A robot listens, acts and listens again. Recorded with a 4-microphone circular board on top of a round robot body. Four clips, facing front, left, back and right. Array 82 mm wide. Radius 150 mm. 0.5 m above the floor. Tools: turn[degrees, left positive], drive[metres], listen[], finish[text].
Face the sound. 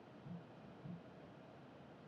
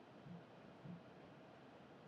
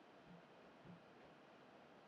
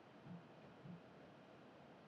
Action: listen[]
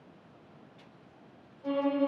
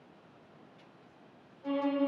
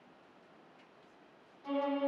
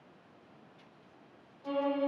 Thought: The violin: 30° left.
Action: turn[30]
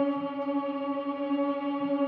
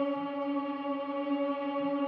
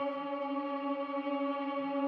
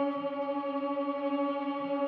Action: finish[Facing the violin, 1 to 2 m away.]